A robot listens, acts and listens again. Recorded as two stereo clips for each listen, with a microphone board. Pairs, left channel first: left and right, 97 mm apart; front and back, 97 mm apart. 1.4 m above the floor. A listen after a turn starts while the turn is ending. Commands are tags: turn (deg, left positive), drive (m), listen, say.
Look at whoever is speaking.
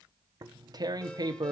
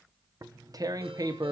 <listen/>
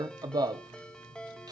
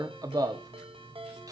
<listen/>
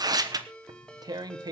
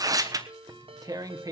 <say>I can't make out anyone speaking, only tearing paper and a ringtone.</say>